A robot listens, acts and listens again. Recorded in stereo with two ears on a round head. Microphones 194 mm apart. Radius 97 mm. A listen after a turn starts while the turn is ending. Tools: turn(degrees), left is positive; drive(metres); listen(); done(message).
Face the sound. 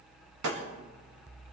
turn(degrees=-90)
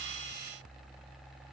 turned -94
done("Facing where the breaking glass came from. I can't hear it now.")